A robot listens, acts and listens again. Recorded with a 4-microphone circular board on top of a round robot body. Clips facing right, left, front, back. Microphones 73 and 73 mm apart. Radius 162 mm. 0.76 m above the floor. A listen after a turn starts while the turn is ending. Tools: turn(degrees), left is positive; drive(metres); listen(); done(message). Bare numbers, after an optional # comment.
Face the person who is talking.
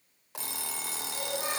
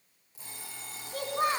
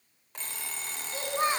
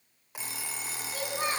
# The child speaking: 65° left.
turn(65)
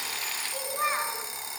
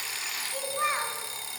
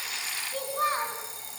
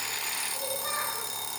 done("Facing the child speaking, over 4 m away.")